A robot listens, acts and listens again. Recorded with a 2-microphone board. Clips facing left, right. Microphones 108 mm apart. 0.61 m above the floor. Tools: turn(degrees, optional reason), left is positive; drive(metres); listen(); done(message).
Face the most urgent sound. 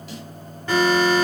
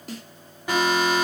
turn(degrees=-30)
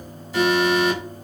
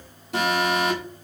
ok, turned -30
turn(degrees=-135, reason="So it is at 135° right.")
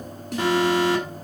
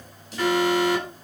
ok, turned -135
turn(degrees=25, reason="The alarm is now 25° left.")
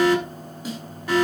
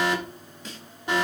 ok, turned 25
turn(degrees=-20, reason="The alarm is now 20° right.")
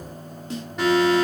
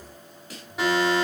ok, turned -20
done("Facing the alarm, over 4 m away.")